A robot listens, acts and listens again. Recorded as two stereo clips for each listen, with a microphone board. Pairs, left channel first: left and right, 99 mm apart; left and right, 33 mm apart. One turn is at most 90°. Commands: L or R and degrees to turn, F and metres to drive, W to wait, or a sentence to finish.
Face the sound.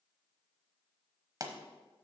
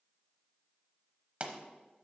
R40
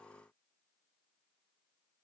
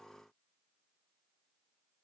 W
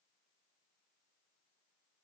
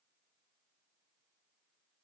I heard a pop, but can't make it out now. It was about straight ahead or 100° right.